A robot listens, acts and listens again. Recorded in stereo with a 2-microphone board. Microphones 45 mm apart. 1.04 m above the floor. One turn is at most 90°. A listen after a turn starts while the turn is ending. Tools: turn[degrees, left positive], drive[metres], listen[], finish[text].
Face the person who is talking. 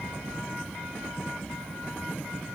Action: listen[]
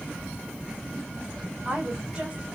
Thought: The woman speaking: about 20° right or 160° right.
Action: turn[-20]
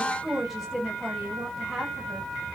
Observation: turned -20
Action: finish[Found it: a woman speaking, straight ahead.]